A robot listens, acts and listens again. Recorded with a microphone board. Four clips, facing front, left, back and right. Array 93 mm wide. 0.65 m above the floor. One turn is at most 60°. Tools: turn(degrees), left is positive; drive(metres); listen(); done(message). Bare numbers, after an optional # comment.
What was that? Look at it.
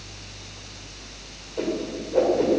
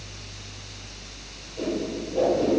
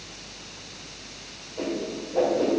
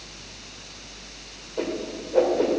# The whoosh: 60° right.
turn(-60)
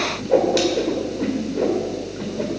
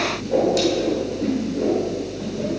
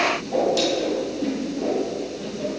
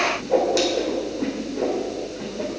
# The whoosh is now 20° right.
turn(-20)
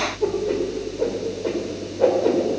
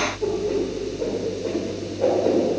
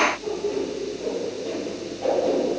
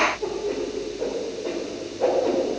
done("Found it: a whoosh, straight ahead.")